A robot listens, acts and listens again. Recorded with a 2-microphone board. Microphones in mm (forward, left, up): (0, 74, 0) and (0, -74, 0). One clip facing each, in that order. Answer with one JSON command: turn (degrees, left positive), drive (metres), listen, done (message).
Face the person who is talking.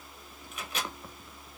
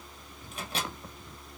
{"listen": true}
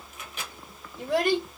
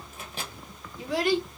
{"turn": 55}
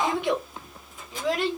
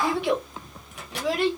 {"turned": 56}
{"done": "Facing the child speaking, 1 to 2 m away."}